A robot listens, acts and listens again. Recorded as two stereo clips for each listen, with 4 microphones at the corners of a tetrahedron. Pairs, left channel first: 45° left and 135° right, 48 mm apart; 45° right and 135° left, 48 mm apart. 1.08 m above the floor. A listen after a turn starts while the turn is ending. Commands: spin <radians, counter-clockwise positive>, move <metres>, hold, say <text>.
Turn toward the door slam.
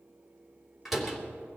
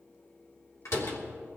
spin -0.87
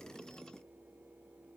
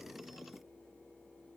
say I heard a door slam from this way, but can't make it out now.